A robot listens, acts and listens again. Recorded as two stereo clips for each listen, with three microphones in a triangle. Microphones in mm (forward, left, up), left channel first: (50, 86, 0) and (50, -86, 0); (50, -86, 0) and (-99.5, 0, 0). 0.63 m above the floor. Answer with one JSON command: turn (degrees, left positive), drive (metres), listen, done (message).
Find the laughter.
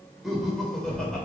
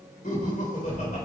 {"done": "Found it: laughter, straight ahead."}